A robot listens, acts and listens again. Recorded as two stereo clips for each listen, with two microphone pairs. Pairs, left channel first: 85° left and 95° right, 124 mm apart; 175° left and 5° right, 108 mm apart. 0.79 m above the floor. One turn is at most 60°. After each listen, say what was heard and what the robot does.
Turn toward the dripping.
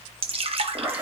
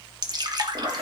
The dripping: 55° right. Turn 55° right.
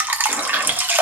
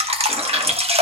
The dripping is now 20° right. Turn 20° right.
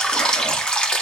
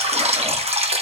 Facing the dripping.